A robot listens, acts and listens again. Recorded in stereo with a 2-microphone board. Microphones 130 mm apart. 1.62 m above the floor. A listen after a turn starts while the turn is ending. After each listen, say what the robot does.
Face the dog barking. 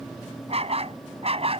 Turn 50° right.
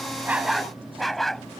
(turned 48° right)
Facing the dog barking.